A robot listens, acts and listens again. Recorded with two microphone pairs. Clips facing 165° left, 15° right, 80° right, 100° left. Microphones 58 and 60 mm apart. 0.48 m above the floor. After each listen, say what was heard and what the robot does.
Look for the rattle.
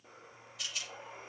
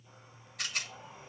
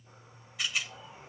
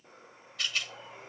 Facing the rattle.